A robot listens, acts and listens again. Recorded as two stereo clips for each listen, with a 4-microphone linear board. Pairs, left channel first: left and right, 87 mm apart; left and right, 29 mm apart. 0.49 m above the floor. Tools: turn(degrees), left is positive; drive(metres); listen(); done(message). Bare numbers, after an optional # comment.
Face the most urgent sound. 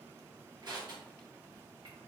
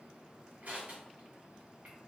listen()
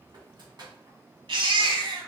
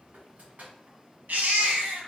# The baby crying: about 75° right or 105° right.
turn(-75)
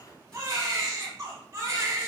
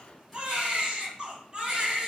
# So it is at 35° right.
turn(-35)
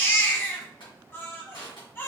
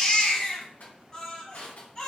# The baby crying is now 25° left.
turn(25)
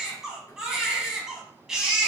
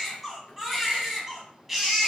done("Facing the baby crying, 1 to 2 m away.")